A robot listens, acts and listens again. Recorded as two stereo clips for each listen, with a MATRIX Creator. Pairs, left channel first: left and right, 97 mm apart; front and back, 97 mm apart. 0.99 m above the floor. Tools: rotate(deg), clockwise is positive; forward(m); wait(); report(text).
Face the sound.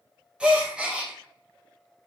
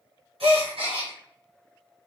rotate(170)
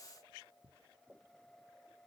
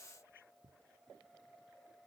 report("I heard a gasp from this way, but can't make it out now.")